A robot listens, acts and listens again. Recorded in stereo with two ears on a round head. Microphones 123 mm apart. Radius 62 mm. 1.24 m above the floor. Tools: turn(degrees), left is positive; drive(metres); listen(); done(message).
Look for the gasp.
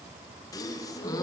turn(degrees=25)
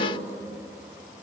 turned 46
listen()
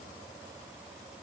done("I heard a gasp, but can't make it out now. It was about 20° right or 110° left.")